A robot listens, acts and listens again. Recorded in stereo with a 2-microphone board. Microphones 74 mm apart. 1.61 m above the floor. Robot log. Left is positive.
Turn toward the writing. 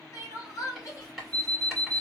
cmd yaw +30
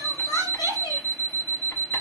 cmd idle
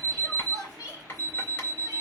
note: So it is at 145° left.
cmd yaw +145
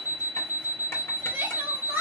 cmd idle
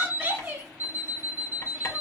note: The writing is now 35° left.
cmd yaw +35
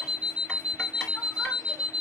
cmd idle
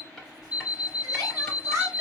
end: Facing the writing.